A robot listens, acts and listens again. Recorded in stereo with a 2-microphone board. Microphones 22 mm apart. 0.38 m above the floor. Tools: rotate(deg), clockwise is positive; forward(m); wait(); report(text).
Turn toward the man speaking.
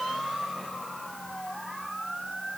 wait()
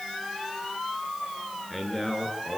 rotate(-30)
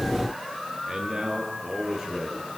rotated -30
rotate(20)
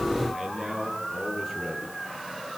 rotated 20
report("Facing the man speaking, over 4 m away.")